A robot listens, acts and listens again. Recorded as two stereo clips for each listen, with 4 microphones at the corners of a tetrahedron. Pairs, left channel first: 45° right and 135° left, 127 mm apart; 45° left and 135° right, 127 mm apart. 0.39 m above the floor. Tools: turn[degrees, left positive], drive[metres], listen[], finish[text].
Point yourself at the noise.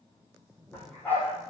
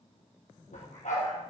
Thought: The dog barking: 35° left.
Action: turn[35]
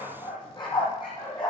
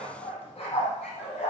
Thought: The dog barking is now 10° left.
Action: turn[10]
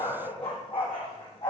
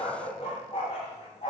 Action: finish[Found it: a dog barking, straight ahead, over 4 m away.]